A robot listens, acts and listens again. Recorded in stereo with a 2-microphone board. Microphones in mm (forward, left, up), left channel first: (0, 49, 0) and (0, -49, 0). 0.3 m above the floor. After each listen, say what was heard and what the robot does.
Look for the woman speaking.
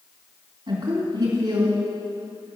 The woman speaking: about 60° right or 120° right. Turn 60° right.
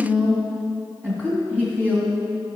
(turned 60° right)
So it is at 15° right. Turn 15° right.
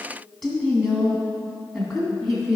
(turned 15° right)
Found it: a woman speaking, straight ahead.